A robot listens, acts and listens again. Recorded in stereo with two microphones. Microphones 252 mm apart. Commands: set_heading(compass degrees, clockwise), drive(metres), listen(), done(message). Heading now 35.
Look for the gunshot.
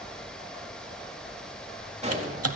set_heading(60)
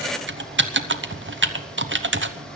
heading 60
listen()
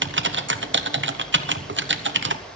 done("I heard a gunshot, but can't make it out now. It was about straight ahead or 130° right.")